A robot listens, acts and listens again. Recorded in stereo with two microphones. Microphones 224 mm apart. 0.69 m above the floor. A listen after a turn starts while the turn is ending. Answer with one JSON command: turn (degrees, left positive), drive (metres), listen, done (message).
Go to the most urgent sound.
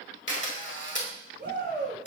{"turn": -50}
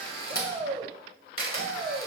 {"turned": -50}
{"turn": -75}
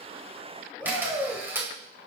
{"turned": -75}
{"turn": 10}
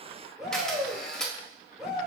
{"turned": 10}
{"drive": 1.0}
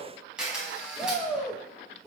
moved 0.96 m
{"drive": 1.0}
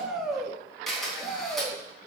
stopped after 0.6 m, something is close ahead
{"done": "Arrived at the shout, straight ahead."}